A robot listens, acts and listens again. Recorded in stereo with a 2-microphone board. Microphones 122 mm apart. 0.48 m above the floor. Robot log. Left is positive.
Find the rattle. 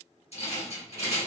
note: The rattle: about 60° left or 120° left.
cmd yaw +60
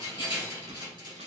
note: So it is at 45° left.
cmd yaw +45
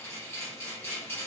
note: The rattle is now 20° left.
cmd yaw +20
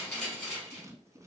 end: Facing the rattle, 2 to 4 m away.